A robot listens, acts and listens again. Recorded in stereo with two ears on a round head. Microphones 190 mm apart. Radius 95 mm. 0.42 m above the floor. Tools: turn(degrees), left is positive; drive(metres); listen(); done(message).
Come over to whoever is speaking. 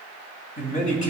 turn(degrees=40)
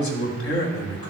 turn(degrees=100)
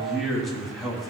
drive(metres=1.0)
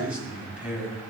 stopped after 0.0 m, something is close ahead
done("Blocked. The man speaking is further on, straight ahead.")